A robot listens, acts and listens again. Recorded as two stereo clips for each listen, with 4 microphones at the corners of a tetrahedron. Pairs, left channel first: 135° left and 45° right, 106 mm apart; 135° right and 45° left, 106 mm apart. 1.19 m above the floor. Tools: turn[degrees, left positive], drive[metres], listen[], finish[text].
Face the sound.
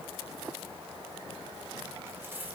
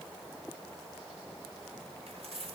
Thought: The keys jangling: 25° left.
Action: turn[25]
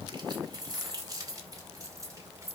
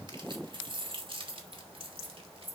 Thought: The keys jangling is now 20° left.
Action: turn[20]
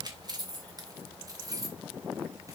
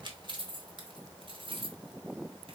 Thought: The keys jangling is now 10° left.
Action: turn[10]
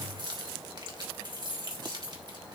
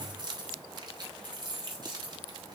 Action: finish[Found it: keys jangling, straight ahead, 2 to 4 m away.]